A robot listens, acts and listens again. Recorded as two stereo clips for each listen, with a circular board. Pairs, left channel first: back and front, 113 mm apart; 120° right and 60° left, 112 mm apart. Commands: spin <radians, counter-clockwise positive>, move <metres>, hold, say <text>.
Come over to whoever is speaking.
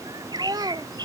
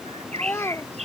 spin -0.96
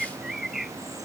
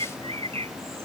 hold
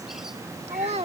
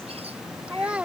spin -0.35
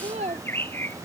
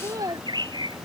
move 1.0
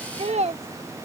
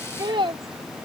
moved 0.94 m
spin 0.26
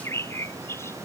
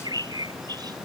hold
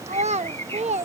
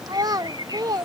move 1.0
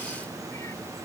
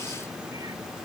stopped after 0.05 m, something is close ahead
hold
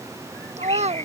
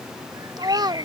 spin 0.17
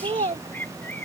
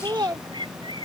say I am next to the child speaking.